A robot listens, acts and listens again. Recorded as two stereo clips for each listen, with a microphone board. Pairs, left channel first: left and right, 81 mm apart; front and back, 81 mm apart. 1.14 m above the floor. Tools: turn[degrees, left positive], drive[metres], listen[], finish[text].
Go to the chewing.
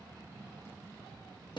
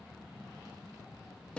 Action: listen[]
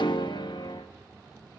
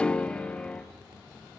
Action: listen[]
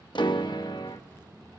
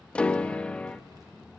Action: finish[I can't make out chewing to turn to.]